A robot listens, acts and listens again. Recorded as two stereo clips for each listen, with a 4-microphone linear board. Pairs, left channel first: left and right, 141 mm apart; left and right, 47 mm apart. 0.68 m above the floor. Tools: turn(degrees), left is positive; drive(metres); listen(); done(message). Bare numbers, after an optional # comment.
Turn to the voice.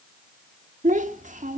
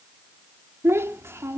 # The child speaking: about 60° right or 120° right.
turn(-60)
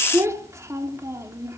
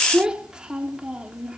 # So it is at 25° right.
turn(-25)
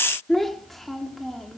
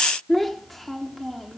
done("Facing the child speaking, 1 to 2 m away.")